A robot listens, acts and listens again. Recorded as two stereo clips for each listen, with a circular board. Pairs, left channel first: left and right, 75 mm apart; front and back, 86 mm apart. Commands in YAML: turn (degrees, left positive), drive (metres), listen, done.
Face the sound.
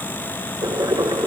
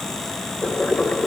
turn: -70
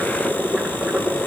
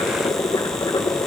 turn: -15
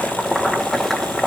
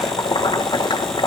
done: "Facing the boiling."